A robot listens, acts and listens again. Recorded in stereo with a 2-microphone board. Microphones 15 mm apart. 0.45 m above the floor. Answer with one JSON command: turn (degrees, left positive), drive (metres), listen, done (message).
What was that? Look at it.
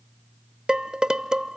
{"turn": -60}
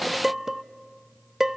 {"turn": -30}
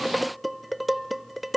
{"done": "Facing the dishes clattering, under 1 m away."}